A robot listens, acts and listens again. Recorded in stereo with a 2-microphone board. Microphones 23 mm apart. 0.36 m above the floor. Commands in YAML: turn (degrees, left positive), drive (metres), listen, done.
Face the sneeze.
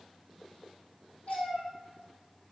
listen: true
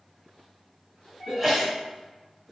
turn: -30
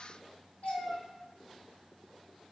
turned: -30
listen: true
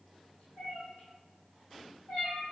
done: "I heard a sneeze, but can't make it out now. It was about 15° left or 135° right."